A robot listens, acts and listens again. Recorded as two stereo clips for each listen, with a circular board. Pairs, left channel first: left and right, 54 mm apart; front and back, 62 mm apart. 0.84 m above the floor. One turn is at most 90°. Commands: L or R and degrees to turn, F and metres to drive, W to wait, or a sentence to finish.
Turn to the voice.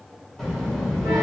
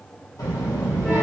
Facing the child speaking, 1 to 2 m away.